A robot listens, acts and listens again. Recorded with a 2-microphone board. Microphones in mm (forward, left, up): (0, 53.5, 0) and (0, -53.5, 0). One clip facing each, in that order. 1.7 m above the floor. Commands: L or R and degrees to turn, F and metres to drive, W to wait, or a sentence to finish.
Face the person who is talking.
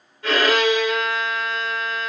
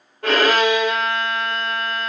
W
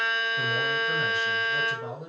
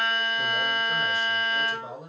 L70
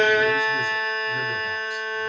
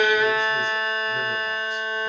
W
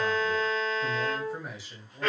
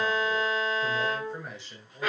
Found it: a man speaking, straight ahead, 2 to 4 m away.